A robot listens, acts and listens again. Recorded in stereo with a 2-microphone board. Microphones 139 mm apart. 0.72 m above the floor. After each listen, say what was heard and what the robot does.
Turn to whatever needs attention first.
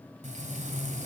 Keep listening.
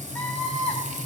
Turn 30° left.
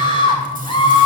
So it is at 145° left. Turn 145° left.
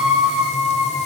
Found it: a scream, straight ahead.